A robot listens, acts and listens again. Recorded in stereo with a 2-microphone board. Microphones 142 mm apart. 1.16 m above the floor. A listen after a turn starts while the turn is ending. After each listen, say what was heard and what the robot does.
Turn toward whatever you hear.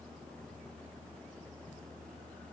Keep listening.
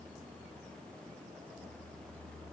Keep listening.
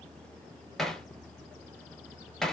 Turn 30° left.
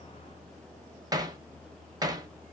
So it is at 25° right. Turn 25° right.
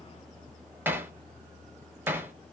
The hammering is now 15° right. Turn 15° right.
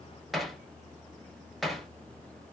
Facing the hammering.